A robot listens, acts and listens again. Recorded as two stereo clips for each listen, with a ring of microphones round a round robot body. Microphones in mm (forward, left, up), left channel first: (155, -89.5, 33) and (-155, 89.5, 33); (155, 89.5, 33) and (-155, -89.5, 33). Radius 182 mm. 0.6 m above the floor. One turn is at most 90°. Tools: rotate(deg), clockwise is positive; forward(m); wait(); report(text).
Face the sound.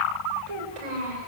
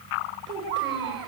rotate(-90)
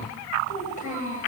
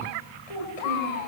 rotate(-40)
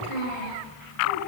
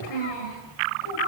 report("Facing the child speaking, over 4 m away.")